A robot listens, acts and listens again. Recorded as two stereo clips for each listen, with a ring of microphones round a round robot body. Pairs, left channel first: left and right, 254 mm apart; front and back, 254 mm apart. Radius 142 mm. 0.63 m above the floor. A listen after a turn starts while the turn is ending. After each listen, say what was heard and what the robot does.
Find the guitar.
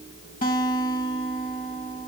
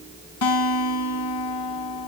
The guitar: 25° left. Turn 25° left.
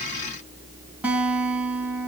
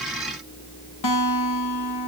Facing the guitar.